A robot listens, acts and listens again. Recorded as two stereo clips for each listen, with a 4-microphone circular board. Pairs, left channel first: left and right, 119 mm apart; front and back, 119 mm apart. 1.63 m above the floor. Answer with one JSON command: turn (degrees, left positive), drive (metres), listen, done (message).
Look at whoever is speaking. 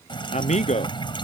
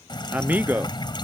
{"turn": 105}
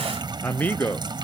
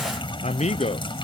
{"turn": 15}
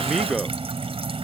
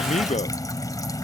{"done": "Facing the man speaking."}